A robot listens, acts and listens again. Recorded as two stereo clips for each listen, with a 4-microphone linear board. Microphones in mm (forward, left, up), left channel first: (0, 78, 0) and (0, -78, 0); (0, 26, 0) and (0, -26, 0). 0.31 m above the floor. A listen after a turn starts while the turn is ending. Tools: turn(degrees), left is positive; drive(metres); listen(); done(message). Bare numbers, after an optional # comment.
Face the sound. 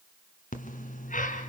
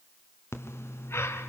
# The breathing: about 55° left or 125° left.
turn(55)
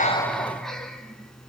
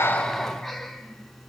done("Facing the breathing.")